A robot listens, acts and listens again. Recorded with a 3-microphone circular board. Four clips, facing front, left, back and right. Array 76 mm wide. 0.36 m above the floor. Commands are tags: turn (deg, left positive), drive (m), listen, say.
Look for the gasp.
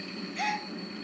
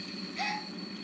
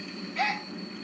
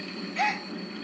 <turn deg="-115"/>
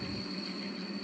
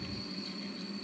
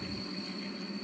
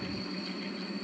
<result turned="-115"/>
<say>I heard a gasp from this way, but can't make it out now.</say>